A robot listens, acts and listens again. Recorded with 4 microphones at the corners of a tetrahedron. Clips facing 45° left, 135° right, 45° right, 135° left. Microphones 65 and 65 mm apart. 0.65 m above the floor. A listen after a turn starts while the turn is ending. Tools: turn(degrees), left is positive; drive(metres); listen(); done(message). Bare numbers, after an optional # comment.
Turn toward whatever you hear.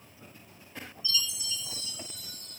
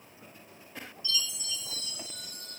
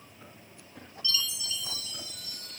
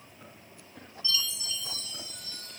# The chime: 165° right.
turn(-165)
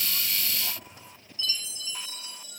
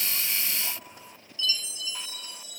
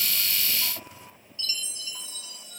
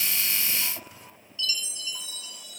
done("Facing the chime.")